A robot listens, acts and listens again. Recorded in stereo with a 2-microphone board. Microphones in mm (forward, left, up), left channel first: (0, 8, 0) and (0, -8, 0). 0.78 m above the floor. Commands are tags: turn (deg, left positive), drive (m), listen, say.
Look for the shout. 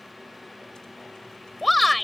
<turn deg="30"/>
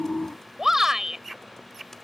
<turn deg="-20"/>
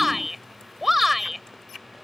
<say>Facing the shout.</say>